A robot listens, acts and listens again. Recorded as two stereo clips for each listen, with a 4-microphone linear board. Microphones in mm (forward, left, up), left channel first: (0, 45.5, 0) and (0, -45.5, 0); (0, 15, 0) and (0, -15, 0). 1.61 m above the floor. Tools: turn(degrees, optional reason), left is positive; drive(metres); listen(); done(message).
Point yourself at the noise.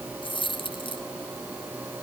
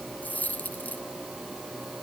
turn(degrees=65, reason="The dropped coin: about 65° left or 115° left.")
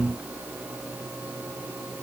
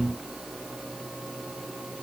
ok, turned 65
listen()
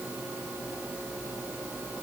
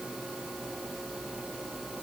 done("I heard a dropped coin, but can't make it out now. It was about straight ahead or 50° left.")